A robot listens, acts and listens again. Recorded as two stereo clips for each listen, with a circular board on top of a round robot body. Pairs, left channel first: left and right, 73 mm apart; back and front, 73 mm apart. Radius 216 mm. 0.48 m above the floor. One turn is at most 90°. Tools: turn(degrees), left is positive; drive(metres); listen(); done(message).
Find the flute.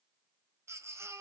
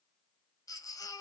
listen()
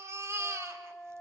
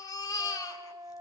done("Facing the flute, 2 to 4 m away.")